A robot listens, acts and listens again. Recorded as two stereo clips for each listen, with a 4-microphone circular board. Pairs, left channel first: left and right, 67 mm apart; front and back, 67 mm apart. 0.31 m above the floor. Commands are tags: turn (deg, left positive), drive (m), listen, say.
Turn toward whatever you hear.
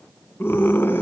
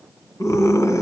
<turn deg="35"/>
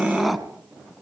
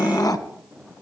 <say>Facing the scream, 2 to 4 m away.</say>